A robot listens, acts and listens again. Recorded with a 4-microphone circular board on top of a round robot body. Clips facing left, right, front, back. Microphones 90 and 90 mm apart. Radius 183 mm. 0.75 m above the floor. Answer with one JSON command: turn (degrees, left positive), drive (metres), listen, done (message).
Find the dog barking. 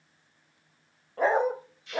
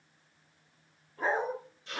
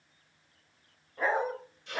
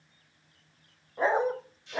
{"turn": 105}
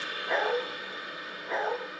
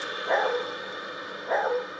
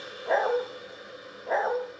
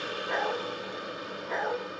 {"turn": -45}
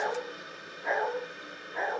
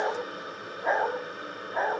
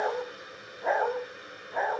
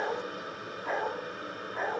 {"turn": -40}
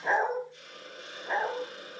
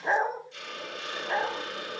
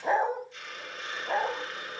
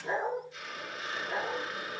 {"done": "Found it: a dog barking, straight ahead, 2 to 4 m away."}